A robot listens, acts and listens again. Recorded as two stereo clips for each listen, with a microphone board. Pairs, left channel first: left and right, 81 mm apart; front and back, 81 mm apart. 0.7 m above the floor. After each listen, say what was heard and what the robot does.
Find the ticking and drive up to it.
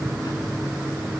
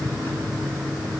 Keep listening.
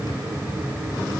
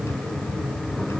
Keep listening.
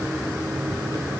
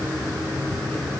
I can't make out ticking.